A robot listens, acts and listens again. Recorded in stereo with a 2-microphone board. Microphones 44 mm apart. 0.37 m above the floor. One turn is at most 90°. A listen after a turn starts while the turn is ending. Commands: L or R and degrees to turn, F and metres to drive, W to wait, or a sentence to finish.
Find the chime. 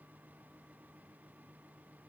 W
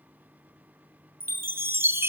R60
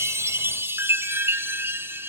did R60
R60
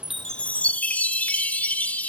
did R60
L35
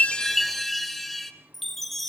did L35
Facing the chime.